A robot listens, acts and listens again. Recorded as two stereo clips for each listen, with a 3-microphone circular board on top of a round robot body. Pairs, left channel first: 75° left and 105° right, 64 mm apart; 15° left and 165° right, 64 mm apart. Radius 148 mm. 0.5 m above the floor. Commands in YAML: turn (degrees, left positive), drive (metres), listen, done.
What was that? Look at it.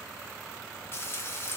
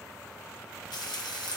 turn: 20
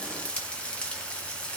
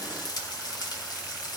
done: "Found it: frying, straight ahead, under 1 m away."